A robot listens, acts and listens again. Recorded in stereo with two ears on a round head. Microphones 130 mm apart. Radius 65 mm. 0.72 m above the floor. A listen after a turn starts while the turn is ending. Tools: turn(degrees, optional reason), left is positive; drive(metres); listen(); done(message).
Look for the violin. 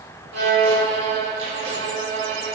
turn(degrees=-90)
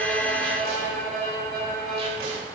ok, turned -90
done("Facing the violin, 2 to 4 m away.")